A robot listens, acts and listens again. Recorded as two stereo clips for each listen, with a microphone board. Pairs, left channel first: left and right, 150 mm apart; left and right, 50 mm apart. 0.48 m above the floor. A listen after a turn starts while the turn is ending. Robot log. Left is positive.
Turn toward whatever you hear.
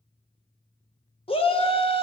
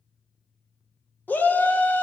note: The shout: about 40° left or 140° left.
cmd yaw +40
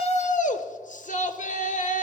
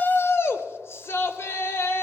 note: So it is at 95° left.
cmd yaw +95
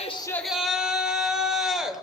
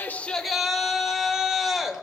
end: Facing the shout.